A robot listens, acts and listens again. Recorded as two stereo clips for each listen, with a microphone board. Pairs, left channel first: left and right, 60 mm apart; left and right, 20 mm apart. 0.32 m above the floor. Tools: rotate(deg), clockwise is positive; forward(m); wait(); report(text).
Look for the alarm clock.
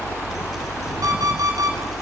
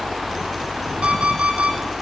rotate(90)
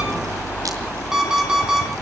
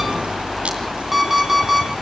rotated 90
rotate(10)
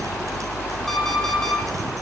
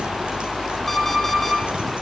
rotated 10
report("Facing the alarm clock.")